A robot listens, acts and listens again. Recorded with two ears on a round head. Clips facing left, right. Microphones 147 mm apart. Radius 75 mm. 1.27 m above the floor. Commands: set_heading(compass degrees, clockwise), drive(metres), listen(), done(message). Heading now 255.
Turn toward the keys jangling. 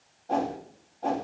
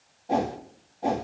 listen()
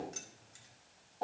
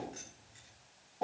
set_heading(205)
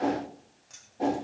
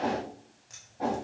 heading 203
done("Found it: keys jangling, straight ahead, 2 to 4 m away.")